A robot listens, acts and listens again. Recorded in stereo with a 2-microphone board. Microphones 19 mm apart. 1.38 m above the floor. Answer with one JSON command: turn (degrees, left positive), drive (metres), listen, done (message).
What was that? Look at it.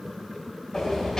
{"turn": 35}
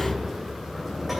{"done": "Facing the sliding door."}